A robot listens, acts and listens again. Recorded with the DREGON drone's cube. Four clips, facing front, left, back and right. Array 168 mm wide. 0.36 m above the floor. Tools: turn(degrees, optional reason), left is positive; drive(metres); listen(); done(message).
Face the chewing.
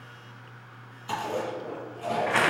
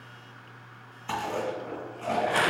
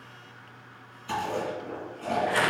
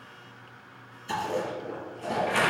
turn(degrees=75, reason="The chewing: 75° left.")
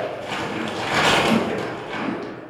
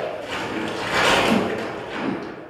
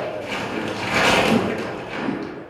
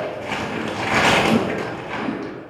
turn(degrees=-15, reason="The chewing is now 15° right.")
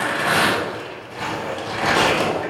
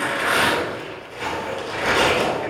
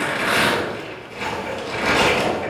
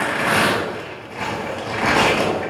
listen()
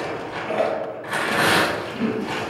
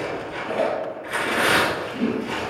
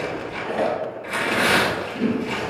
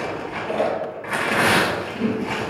done("Facing the chewing, 1 to 2 m away.")